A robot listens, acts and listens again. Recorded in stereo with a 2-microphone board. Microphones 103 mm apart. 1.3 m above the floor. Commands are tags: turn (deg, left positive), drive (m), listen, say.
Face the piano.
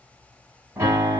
<turn deg="-30"/>
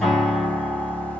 <say>Facing the piano, 2 to 4 m away.</say>